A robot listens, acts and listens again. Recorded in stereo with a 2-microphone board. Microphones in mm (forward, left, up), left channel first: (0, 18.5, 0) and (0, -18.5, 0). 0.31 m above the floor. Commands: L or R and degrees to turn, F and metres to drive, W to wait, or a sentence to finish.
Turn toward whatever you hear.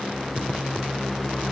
W
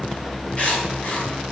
L40
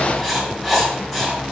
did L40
Found it: writing, straight ahead, 2 to 4 m away.